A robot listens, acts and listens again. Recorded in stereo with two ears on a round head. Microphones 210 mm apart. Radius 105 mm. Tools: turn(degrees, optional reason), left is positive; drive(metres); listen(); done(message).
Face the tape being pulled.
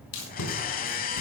turn(degrees=65, reason="The tape being pulled: about 65° left or 115° left.")
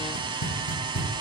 turn(degrees=45, reason="So it is at 45° left.")
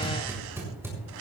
turn(degrees=-10, reason="The tape being pulled is now 10° right.")
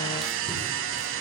listen()
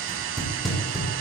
done("Found it: tape being pulled, straight ahead.")